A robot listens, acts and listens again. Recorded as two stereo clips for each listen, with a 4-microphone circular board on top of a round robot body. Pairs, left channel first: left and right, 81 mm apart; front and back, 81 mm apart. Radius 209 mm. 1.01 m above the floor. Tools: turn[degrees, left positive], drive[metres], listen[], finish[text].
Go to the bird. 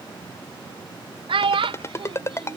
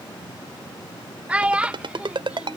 Action: listen[]
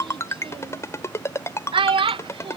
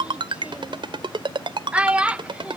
Action: listen[]
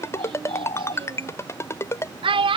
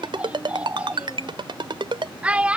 Thought: The bird: 115° left.
Action: turn[115]
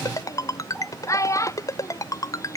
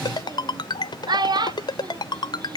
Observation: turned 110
Action: listen[]
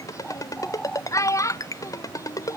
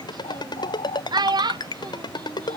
Action: drive[1.0]
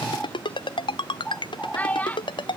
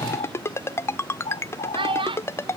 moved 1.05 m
Action: drive[1.0]
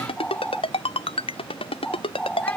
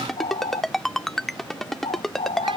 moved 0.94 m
Thought: The bird is now 10° left.
Action: turn[10]
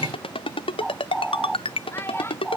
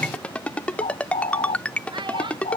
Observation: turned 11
Action: drive[1.0]
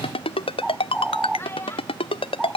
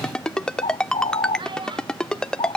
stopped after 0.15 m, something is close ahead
Action: finish[Arrived at the bird, straight ahead.]